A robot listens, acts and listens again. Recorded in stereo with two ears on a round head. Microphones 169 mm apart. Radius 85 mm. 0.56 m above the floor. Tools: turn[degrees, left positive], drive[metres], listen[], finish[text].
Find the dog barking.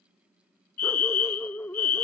Action: turn[30]
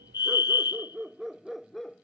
Action: turn[30]
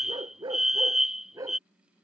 Thought: So it is at 20° right.
Action: turn[-20]
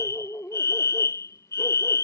Thought: The dog barking is now 10° left.
Action: turn[10]
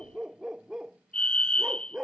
Action: finish[Facing the dog barking.]